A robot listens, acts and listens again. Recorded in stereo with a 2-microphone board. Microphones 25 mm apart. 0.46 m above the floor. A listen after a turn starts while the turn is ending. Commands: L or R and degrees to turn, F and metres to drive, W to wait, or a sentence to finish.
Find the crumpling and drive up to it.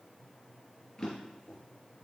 W
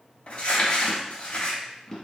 L50
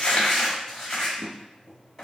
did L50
F1.0
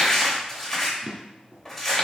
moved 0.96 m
F1.0
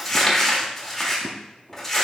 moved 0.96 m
L15
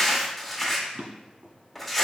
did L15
F1.0
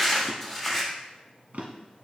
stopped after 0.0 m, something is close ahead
I am next to the crumpling.